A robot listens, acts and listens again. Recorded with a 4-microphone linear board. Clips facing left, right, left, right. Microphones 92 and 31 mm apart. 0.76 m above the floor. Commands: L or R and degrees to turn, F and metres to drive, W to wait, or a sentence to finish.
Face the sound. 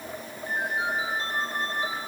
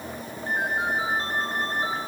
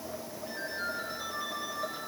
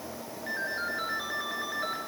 R45
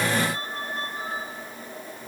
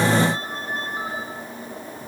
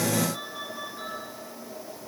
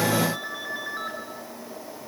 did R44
R90
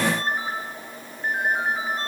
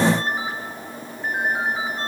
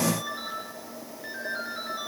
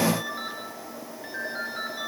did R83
Facing the ringtone.